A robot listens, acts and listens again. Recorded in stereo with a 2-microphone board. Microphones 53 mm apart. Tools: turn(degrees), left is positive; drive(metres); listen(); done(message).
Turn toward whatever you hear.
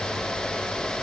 listen()
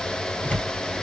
turn(degrees=30)
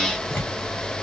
turn(degrees=120)
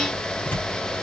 turn(degrees=35)
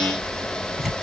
done("Facing the tearing paper, 2 to 4 m away.")